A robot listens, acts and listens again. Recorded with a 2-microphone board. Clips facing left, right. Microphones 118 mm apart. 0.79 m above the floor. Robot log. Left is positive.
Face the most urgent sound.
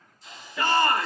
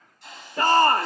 note: The shout: about 45° right or 135° right.
cmd yaw -45
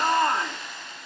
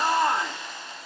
end: Facing the shout, 1 to 2 m away.